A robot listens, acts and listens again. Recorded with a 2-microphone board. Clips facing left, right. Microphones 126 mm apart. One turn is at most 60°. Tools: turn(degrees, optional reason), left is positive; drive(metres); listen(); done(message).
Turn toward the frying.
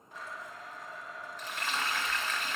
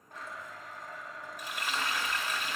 turn(degrees=-30)
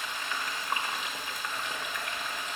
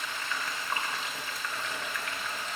turn(degrees=15, reason="So it is at 15° left.")
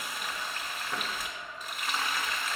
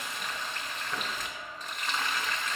turn(degrees=10, reason="The frying is now 10° left.")
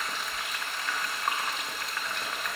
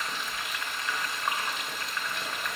done("Found it: frying, straight ahead.")